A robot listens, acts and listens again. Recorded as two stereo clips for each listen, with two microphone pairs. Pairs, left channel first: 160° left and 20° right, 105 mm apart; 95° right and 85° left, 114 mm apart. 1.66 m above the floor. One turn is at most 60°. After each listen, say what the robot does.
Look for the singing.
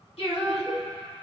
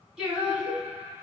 Turn 60° left.
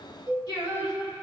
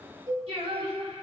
Turn 60° left.
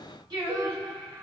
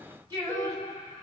Turn 25° left.
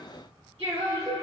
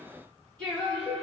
Turn 15° right.
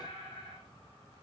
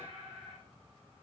Found it: singing, straight ahead.